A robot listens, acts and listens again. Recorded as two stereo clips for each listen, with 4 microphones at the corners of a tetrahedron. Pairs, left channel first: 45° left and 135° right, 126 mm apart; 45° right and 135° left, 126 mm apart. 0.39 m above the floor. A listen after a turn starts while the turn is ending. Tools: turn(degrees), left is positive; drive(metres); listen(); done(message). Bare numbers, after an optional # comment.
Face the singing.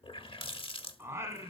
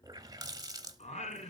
# The singing: 70° right.
turn(-70)
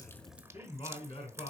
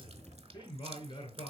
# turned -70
done("Facing the singing, 2 to 4 m away.")